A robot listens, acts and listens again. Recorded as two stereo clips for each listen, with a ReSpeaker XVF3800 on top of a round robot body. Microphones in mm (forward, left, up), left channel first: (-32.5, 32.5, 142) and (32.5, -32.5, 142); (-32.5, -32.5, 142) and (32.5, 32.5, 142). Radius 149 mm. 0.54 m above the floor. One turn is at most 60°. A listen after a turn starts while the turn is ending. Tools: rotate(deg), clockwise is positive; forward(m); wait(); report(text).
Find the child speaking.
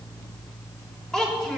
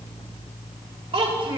rotate(-50)
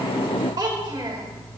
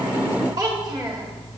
report("Facing the child speaking, 2 to 4 m away.")